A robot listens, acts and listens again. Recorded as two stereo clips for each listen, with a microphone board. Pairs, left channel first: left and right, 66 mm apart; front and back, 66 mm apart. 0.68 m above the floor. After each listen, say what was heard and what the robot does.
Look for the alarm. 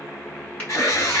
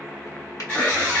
The alarm: 60° left. Turn 60° left.
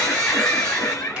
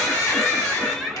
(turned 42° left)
The alarm is now 15° left. Turn 15° left.
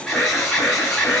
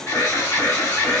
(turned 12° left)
Found it: an alarm, straight ahead, 2 to 4 m away.